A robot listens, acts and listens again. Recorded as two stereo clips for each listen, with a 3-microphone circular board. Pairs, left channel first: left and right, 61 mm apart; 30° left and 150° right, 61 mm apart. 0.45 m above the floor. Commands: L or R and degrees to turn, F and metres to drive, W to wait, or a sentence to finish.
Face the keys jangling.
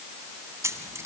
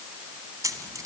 R130
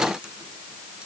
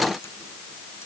W
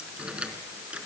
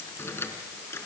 R20
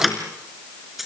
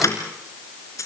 Facing the keys jangling.